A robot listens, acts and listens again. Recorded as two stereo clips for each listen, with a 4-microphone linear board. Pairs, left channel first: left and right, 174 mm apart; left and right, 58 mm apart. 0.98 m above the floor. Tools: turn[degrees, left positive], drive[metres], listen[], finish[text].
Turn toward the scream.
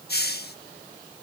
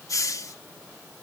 Action: listen[]
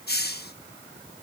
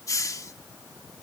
Action: listen[]
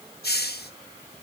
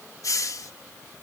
Action: finish[I can't make out a scream to turn to.]